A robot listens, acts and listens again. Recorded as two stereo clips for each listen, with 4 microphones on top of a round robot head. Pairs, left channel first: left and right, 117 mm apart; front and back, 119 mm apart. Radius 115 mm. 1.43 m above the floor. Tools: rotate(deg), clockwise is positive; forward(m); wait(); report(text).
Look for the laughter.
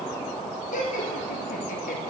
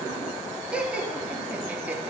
rotate(-105)
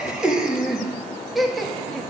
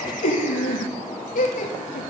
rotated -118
report("Found it: laughter, straight ahead, 2 to 4 m away.")